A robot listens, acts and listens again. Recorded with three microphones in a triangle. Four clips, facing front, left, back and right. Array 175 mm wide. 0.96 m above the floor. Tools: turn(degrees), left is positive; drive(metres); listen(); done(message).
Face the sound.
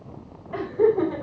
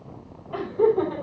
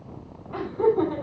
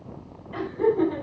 turn(degrees=50)
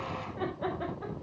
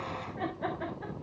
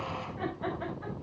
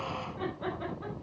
turn(degrees=15)
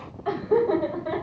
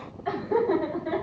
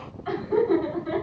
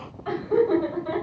turn(degrees=15)
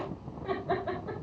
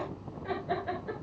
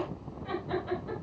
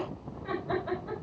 done("Found it: laughter, straight ahead.")